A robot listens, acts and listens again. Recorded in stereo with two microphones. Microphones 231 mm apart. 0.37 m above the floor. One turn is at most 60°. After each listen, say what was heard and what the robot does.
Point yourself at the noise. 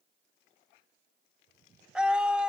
Turn 30° right.
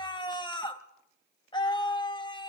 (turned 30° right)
So it is at 25° left. Turn 25° left.
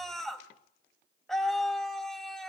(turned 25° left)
Found it: a scream, straight ahead.